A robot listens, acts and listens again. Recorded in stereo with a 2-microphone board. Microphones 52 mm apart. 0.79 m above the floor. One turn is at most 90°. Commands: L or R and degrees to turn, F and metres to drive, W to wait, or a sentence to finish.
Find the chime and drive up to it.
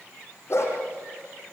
W
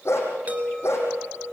R30
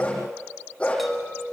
F1.0
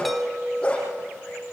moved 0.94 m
F1.0
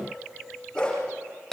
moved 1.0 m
F1.0
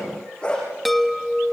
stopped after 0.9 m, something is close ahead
I am next to the chime.